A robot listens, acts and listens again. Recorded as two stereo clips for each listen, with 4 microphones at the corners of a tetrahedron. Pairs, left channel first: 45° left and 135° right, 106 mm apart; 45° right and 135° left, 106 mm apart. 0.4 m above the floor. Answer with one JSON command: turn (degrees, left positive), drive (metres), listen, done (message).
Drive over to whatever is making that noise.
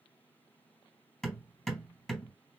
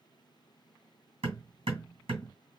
{"turn": 130}
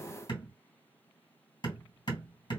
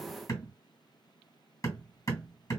{"turn": 10}
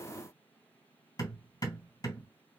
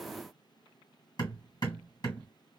{"drive": 1.0}
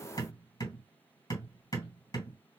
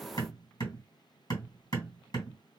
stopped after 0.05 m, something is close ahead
{"done": "Something is in my way. I am facing the hammering but have not reached it."}